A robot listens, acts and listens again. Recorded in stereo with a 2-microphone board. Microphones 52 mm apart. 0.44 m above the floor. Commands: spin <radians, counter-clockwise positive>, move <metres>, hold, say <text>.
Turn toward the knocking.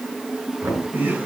spin -1.22
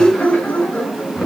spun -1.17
say Facing the knocking, over 4 m away.